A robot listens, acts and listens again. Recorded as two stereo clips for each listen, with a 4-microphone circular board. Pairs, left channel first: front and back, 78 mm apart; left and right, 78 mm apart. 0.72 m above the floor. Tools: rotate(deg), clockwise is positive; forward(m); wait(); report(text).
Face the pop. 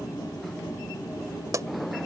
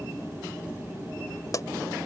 rotate(-135)
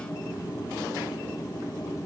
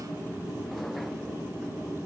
report("Facing where the pop came from. I can't hear it now.")